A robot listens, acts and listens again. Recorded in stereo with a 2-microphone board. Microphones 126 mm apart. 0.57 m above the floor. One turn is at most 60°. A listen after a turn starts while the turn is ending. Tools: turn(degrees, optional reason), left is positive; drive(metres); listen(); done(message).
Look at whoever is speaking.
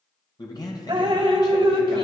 turn(degrees=35, reason="The man speaking: about 35° left or 145° left.")
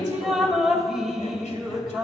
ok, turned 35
listen()
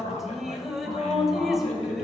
turn(degrees=60, reason="So it is at 105° left.")
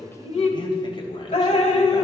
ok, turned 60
turn(degrees=45, reason="The man speaking is now 45° left.")
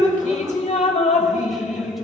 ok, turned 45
listen()
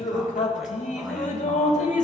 listen()
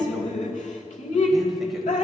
done("I heard a man speaking from this way, but can't make it out now.")